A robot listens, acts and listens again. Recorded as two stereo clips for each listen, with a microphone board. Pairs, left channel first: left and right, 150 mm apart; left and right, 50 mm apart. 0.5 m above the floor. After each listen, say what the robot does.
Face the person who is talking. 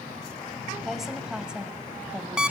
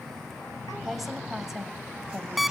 Turn 30° right.
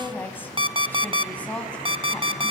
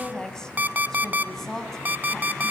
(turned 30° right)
Turn 10° left.
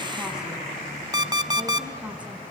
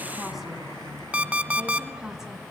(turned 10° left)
Keep listening.
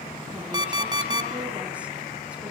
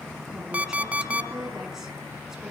Keep listening.
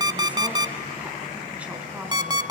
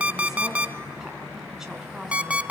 Facing where the woman speaking came from. I can't hear it now.